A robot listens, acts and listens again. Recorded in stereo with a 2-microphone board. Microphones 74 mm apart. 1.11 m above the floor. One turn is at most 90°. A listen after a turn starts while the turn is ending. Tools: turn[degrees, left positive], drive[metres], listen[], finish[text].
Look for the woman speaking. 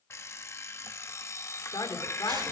Thought: The woman speaking: about 70° left or 110° left.
Action: turn[70]
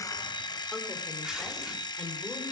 Action: listen[]
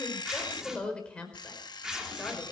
Thought: So it is at 15° left.
Action: turn[15]
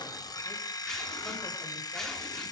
Action: listen[]
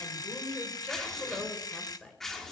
Action: finish[Facing the woman speaking, over 4 m away.]